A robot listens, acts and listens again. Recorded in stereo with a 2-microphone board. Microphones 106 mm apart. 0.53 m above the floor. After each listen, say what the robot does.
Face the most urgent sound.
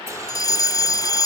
Turn 35° left.
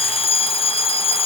Turn 105° left.
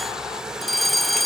Facing the fire alarm.